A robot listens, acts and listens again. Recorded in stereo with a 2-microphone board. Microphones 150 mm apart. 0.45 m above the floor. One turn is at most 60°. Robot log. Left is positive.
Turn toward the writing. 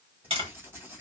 cmd yaw -30
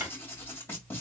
note: So it is at 15° left.
cmd yaw +15
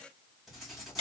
end: Facing the writing.